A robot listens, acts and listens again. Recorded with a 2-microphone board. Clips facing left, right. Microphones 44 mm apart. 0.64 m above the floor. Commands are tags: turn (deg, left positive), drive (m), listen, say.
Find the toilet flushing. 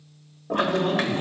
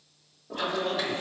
<turn deg="55"/>
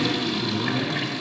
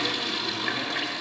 <say>Found it: a toilet flushing, straight ahead.</say>